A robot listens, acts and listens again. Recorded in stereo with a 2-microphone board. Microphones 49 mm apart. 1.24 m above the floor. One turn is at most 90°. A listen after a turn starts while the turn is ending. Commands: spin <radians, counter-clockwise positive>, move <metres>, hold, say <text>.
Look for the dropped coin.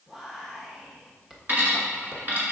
spin -0.61
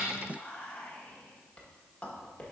hold
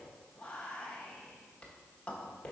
say I heard a dropped coin, but can't make it out now. It was about straight ahead or 110° right.